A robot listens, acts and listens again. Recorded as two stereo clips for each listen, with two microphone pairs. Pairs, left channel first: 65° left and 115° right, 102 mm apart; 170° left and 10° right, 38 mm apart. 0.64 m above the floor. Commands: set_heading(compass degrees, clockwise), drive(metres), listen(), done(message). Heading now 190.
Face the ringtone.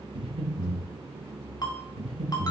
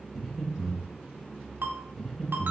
set_heading(180)
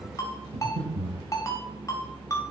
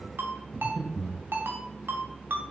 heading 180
done("Facing the ringtone.")